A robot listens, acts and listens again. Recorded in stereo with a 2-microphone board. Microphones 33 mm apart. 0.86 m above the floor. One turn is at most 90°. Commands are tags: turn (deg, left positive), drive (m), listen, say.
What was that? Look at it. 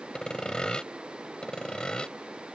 <turn deg="25"/>
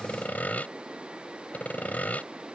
<turn deg="90"/>
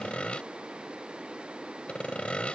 <turn deg="35"/>
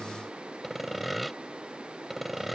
<say>Found it: sawing, straight ahead.</say>